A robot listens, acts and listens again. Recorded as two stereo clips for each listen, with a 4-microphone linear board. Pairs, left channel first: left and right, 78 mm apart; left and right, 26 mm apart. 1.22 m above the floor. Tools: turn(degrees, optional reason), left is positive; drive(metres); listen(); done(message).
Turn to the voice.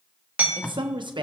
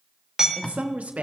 turn(degrees=-70, reason="The woman speaking: about 70° right or 110° right.")
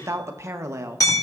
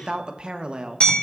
turn(degrees=-35, reason="So it is at 35° right.")
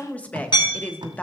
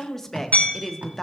turn(degrees=15, reason="The woman speaking is now 15° left.")
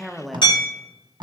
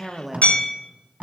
done("Found it: a woman speaking, straight ahead.")